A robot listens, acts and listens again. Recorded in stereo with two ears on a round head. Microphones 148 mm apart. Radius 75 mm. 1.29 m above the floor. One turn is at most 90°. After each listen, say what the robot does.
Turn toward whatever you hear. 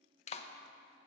Turn 40° left.
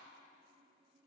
Keep listening.
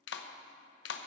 Turn 90° left.
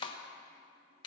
Turn 25° left.
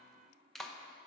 Facing the clap.